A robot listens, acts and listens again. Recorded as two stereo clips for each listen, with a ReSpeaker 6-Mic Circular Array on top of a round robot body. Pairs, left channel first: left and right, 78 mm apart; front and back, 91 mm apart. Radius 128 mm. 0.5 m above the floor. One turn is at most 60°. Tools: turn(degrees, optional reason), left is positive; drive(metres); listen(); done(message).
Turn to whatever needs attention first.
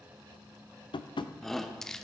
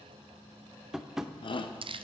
done("Found it: a shout, straight ahead.")